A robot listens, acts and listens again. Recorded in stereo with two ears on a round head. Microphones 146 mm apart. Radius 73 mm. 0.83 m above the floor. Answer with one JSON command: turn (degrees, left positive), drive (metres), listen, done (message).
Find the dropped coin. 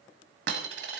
{"turn": -75}
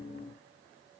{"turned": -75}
{"listen": true}
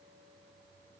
{"done": "I heard a dropped coin, but can't make it out now. It was about straight ahead or 30° right."}